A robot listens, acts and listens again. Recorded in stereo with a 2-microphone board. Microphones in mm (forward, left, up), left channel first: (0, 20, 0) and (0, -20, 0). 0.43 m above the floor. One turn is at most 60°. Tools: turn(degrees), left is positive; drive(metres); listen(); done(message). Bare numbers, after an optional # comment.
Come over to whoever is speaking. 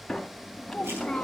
turn(30)
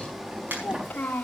# So it is at 140° left.
turn(60)
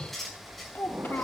# The child speaking is now 80° left.
turn(60)
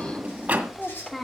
# The child speaking is now 20° left.
turn(20)
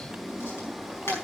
listen()
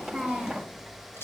drive(1.0)
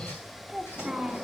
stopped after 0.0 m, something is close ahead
done("Something is in my way. I am facing the child speaking but have not reached it.")